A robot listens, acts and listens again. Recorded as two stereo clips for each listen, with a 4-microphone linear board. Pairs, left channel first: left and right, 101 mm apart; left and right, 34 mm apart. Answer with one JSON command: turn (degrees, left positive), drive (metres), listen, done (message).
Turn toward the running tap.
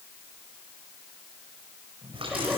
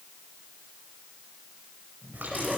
{"turn": -65}
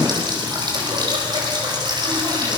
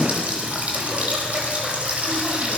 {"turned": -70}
{"turn": -45}
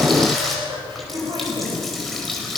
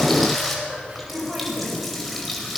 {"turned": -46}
{"done": "Found it: a running tap, straight ahead, over 4 m away."}